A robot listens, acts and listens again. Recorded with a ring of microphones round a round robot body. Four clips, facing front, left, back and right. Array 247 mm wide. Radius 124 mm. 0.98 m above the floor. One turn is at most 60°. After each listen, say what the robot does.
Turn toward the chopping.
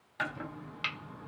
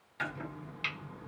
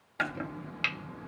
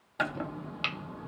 Turn 60° right.
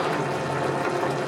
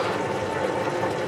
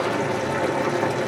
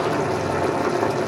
Turn 55° right.
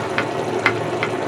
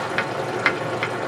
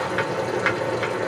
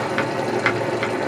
Facing the chopping.